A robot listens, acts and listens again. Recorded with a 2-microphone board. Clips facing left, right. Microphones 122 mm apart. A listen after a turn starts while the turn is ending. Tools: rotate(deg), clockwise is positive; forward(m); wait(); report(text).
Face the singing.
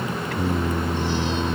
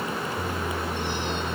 rotate(-70)
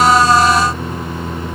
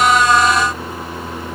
report("Found it: singing, straight ahead.")